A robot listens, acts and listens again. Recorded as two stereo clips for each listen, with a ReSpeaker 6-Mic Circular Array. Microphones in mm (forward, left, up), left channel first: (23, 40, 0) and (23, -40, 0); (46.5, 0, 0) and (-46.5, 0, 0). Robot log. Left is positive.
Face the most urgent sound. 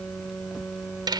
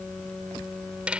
cmd idle
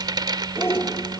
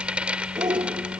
note: The shout: 145° left.
cmd yaw +145
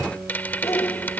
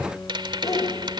note: The shout is now 45° left.
cmd yaw +45
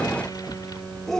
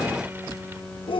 end: Facing the shout.